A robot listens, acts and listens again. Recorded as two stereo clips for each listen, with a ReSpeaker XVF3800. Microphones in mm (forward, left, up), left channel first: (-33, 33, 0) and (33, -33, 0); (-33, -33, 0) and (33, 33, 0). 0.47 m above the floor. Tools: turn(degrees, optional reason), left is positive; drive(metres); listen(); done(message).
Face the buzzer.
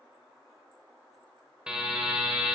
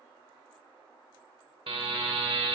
turn(degrees=35, reason="The buzzer: 35° left.")
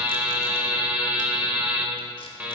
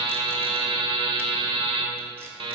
turn(degrees=30, reason="The buzzer is now 30° left.")
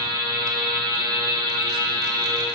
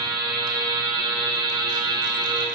done("Facing the buzzer, under 1 m away.")